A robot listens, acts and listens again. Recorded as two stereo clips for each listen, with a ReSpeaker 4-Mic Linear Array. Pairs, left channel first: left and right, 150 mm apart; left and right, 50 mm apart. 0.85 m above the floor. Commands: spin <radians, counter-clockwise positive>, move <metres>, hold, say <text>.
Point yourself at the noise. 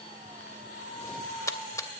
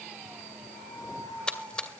spin 0.35
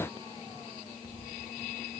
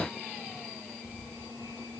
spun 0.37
hold
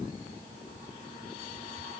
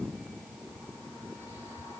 say I heard a splash, but can't make it out now. It was about straight ahead or 140° left.